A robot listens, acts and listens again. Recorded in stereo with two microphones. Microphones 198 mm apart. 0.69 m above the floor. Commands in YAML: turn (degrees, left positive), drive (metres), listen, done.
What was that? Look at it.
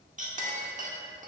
turn: -40
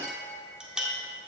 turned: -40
done: "Facing the clink, 1 to 2 m away."